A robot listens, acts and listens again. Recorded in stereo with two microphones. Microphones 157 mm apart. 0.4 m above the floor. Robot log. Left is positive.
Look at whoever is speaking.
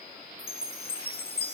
cmd idle
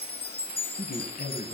note: The man speaking: about 65° left or 115° left.
cmd yaw +65
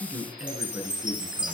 end: Found it: a man speaking, straight ahead.